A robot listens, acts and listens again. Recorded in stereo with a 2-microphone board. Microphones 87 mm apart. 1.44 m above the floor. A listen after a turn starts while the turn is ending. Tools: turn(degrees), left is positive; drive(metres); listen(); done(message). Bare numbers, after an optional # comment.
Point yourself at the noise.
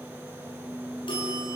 # The bell: about 65° left or 115° left.
turn(65)
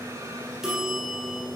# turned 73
done("Found it: a bell, straight ahead, over 4 m away.")